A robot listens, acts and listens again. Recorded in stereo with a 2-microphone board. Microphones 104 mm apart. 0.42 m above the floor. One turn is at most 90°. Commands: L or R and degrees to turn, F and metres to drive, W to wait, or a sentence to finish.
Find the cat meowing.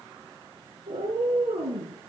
R75
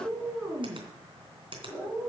Found it: a cat meowing, straight ahead.